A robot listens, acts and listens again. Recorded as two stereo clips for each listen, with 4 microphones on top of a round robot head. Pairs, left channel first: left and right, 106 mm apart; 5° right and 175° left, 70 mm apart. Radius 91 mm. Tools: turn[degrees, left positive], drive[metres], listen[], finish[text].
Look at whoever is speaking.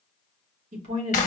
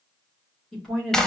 Thought: The woman speaking: 90° right.
Action: turn[-90]
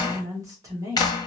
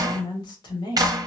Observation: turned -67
Thought: The woman speaking is now 25° right.
Action: turn[-25]
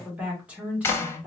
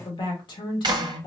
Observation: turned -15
Thought: The woman speaking is now 10° right.
Action: turn[-10]
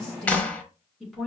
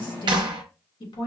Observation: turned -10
Action: finish[Found it: a woman speaking, straight ahead, 1 to 2 m away.]